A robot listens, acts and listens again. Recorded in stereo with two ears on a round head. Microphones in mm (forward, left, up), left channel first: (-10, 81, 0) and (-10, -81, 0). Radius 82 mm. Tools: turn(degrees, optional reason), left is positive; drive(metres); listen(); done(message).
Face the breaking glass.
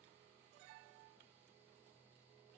listen()
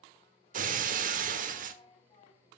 turn(degrees=-45, reason="The breaking glass: about 45° right or 135° right.")
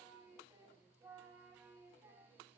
listen()
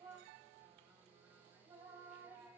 done("I heard breaking glass, but can't make it out now. It was about straight ahead or 90° right.")